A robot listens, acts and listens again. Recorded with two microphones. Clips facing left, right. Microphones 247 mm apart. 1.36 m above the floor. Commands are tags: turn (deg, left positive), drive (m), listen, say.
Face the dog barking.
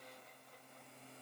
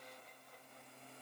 <listen/>
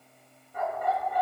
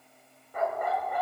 <turn deg="-70"/>
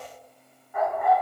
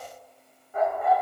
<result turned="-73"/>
<turn deg="-35"/>
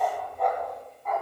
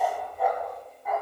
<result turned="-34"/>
<say>Found it: a dog barking, straight ahead.</say>